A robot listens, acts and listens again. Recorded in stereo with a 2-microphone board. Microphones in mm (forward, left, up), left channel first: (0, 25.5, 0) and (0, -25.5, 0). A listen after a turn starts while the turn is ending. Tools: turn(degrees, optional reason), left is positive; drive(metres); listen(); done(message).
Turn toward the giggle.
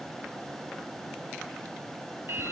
listen()
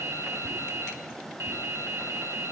listen()
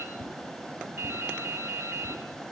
done("I can't make out a giggle to turn to.")